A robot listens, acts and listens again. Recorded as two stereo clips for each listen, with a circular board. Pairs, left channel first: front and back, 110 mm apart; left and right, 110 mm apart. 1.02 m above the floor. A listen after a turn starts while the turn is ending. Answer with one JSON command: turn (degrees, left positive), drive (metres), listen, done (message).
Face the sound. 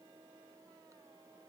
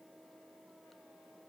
{"listen": true}
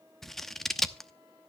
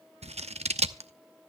{"turn": -85}
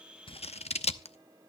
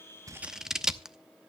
{"done": "Found it: scissors, straight ahead, under 1 m away."}